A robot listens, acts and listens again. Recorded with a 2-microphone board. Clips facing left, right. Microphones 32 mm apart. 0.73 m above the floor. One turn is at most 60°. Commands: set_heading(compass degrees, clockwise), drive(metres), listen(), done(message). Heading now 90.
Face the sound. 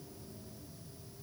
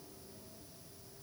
listen()
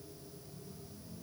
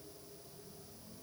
listen()
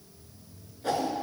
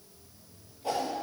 set_heading(30)
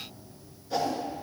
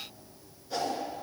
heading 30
done("Facing the whoosh, 1 to 2 m away.")